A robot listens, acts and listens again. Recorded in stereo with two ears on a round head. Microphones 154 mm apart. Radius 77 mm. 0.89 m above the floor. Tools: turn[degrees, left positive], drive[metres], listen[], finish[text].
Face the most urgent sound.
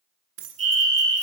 Thought: The fire alarm: about 40° right or 140° right.
Action: turn[-40]
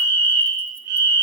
Thought: So it is at 95° right.
Action: turn[-95]
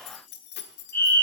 Thought: The fire alarm is now 15° left.
Action: turn[15]
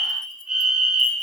Action: finish[Facing the fire alarm.]